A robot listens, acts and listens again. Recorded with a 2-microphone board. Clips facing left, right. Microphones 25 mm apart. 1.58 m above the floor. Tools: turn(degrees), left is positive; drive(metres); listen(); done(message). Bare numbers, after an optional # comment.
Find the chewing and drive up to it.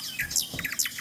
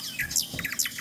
turn(30)
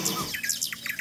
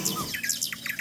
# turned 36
# So it is at 20° right.
turn(-20)
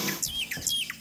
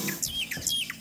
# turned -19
drive(1.0)
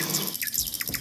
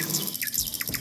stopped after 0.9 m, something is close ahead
done("Something is in my way. I am facing the chewing but have not reached it.")